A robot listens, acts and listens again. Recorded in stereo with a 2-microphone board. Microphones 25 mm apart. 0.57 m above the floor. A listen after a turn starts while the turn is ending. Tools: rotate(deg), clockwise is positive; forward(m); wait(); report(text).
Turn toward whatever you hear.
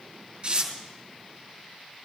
rotate(45)
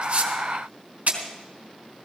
rotate(95)
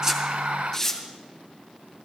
rotate(-15)
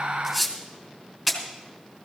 report("Facing the tearing paper, 2 to 4 m away.")